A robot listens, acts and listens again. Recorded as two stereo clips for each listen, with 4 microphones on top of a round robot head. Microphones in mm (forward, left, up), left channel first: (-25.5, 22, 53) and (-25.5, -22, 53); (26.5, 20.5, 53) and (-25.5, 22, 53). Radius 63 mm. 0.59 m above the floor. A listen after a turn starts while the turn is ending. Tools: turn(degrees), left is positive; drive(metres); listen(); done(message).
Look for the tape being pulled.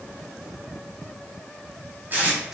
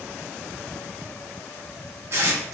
turn(degrees=-140)
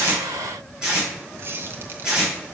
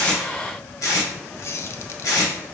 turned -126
turn(degrees=-10)
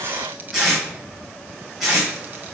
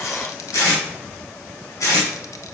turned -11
done("Found it: tape being pulled, straight ahead.")